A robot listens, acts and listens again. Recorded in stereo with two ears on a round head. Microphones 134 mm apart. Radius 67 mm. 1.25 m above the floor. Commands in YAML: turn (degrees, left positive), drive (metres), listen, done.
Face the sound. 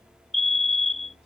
turn: 30
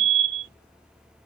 turn: -30
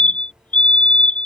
turn: 10
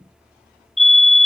done: "Facing the fire alarm."